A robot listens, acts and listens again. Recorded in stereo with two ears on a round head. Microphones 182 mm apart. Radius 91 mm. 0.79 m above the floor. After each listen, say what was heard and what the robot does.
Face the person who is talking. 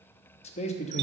The man speaking: about 30° left or 150° left. Turn 30° left.
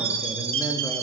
Keep listening.
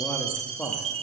Found it: a man speaking, straight ahead.